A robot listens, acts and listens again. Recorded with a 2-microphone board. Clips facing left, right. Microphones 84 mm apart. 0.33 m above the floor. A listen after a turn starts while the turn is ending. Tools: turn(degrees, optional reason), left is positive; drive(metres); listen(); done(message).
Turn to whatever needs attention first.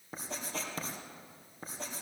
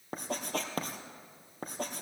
listen()
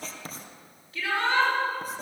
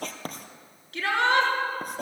turn(degrees=-90)
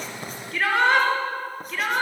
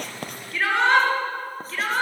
done("Found it: a shout, straight ahead, over 4 m away.")